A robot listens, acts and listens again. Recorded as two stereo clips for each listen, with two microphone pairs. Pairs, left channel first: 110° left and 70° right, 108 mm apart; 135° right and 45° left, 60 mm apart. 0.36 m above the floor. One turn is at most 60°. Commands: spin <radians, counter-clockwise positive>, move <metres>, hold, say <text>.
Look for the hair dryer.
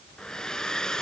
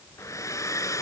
spin -1.05
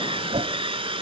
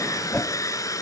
spin -1.05
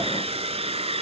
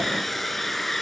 spin -0.79
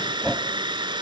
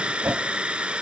spin -0.44
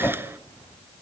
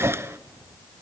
hold
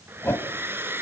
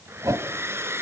say Facing the hair dryer, 1 to 2 m away.